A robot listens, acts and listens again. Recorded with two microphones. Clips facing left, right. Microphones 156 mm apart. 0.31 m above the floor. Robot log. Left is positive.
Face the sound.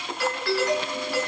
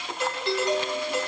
note: The doorbell: about 20° right or 160° right.
cmd yaw -20
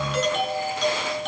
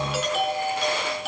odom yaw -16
end: Found it: a doorbell, straight ahead, over 4 m away.